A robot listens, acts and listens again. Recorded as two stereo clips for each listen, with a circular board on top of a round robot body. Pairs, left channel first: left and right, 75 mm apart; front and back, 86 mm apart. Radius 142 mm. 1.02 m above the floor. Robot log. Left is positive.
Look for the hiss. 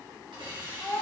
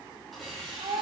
note: The hiss: 95° right.
cmd yaw -95
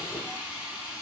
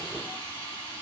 note: The hiss is now 15° right.
cmd yaw -15
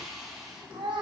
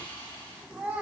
end: Found it: a hiss, straight ahead.